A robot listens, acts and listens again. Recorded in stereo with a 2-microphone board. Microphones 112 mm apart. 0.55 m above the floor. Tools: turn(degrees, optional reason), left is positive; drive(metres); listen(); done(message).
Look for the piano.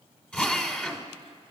listen()
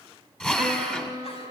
turn(degrees=-40, reason="The piano: about 40° right or 140° right.")
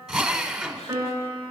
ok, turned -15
turn(degrees=-25, reason="So it is at 25° right.")
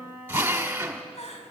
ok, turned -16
turn(degrees=-10, reason="The piano is now 10° right.")
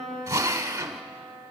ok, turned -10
done("Found it: a piano, straight ahead.")